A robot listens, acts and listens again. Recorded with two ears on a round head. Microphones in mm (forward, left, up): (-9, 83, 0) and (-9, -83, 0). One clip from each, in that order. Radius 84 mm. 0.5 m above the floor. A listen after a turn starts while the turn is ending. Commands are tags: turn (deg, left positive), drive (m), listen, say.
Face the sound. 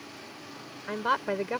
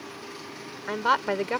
<turn deg="-30"/>
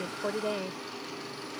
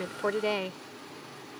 <turn deg="-115"/>
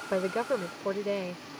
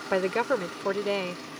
<turn deg="-45"/>
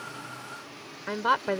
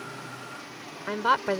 <say>Facing the woman speaking.</say>